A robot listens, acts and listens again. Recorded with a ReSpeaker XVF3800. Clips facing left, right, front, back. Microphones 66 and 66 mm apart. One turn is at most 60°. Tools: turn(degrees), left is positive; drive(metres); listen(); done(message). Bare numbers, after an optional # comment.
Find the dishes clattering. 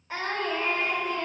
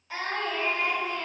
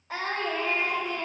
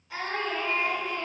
listen()
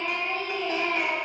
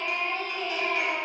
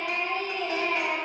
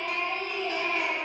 listen()
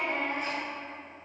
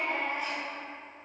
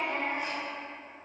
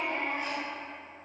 done("I can't make out dishes clattering to turn to.")